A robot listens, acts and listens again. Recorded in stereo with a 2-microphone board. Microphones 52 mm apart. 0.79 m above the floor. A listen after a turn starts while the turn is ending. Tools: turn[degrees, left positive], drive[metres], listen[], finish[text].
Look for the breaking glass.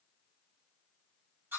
Action: listen[]
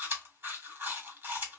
Action: listen[]
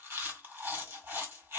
Action: finish[I can't make out breaking glass, only chewing.]